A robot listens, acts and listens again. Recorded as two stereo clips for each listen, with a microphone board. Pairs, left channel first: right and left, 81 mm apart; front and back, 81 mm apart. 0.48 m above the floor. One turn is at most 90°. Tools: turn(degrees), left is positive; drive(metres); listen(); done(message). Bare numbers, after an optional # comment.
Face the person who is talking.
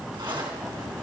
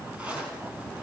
listen()
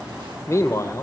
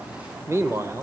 # The man speaking: 130° right.
turn(-90)
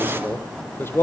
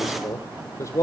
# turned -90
# The man speaking is now 35° right.
turn(-35)
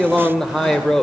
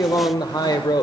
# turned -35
done("Found it: a man speaking, straight ahead, 1 to 2 m away.")